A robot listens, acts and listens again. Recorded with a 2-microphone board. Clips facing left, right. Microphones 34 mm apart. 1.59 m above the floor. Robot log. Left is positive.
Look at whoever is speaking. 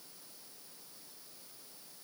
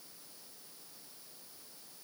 cmd idle
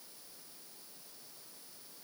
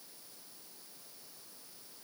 cmd idle
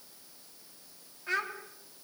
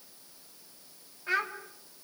cmd yaw -30
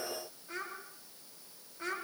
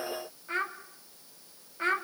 note: So it is at 140° right.
cmd yaw -140
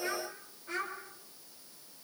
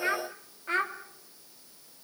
note: The child speaking is now 40° right.
cmd yaw -40
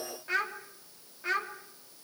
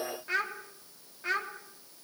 end: Facing the child speaking, 2 to 4 m away.